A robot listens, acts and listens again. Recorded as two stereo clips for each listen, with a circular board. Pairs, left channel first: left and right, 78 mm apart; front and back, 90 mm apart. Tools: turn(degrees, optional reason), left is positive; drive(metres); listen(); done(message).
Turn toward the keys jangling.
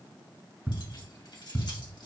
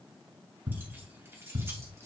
turn(degrees=120, reason="The keys jangling: 120° left.")
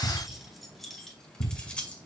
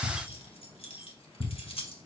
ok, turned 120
turn(degrees=15, reason="The keys jangling is now 15° left.")
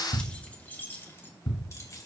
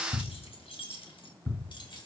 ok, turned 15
turn(degrees=40, reason="The keys jangling is now 40° left.")
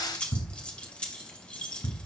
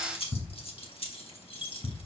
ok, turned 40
turn(degrees=10, reason="The keys jangling is now 10° left.")
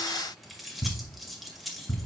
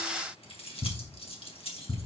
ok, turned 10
done("Facing the keys jangling, 1 to 2 m away.")